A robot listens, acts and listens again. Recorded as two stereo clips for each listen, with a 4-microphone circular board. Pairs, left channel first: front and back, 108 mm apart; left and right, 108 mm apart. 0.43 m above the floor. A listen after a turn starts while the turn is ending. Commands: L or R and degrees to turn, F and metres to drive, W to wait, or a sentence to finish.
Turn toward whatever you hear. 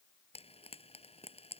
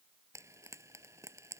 R25
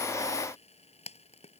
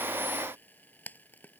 L15
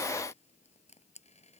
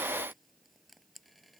Facing the frying.